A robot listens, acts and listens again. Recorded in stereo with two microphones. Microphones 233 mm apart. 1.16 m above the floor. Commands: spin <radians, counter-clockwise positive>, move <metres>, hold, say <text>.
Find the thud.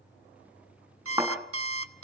spin -0.52
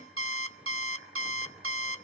hold
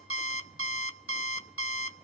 say I heard a thud, but can't make it out now. It was about 20° left or 140° right.